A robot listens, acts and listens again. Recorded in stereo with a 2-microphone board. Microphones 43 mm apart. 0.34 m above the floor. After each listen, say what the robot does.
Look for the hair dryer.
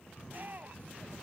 Keep listening.
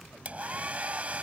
Turn 35° right.
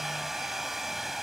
Turn 10° right.
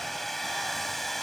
Found it: a hair dryer, straight ahead.